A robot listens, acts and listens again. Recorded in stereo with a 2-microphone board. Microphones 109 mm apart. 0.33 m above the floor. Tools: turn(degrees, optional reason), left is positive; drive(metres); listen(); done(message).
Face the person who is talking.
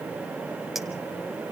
listen()
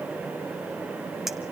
listen()
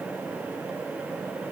done("I can't make out anyone speaking.")